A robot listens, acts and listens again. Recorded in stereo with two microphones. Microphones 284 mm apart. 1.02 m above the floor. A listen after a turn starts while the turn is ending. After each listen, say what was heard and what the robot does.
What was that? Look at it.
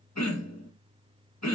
The throat clearing: about 70° left or 110° left. Turn 70° left.
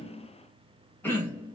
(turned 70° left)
So it is at 10° left. Turn 10° left.
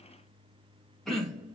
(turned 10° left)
Facing the throat clearing, 1 to 2 m away.